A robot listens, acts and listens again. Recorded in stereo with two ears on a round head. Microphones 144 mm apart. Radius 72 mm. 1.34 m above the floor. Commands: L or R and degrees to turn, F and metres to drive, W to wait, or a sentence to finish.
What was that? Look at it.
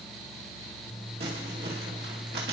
R90
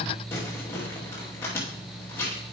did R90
L15
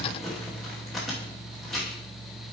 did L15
Facing the crumpling.